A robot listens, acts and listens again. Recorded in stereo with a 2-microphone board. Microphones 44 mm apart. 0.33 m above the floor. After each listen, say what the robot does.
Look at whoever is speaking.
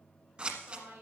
Turn 65° right.
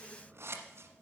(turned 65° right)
Keep listening.
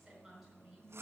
Turn 10° right.
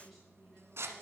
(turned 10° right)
Keep listening.
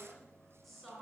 Found it: a woman speaking, straight ahead.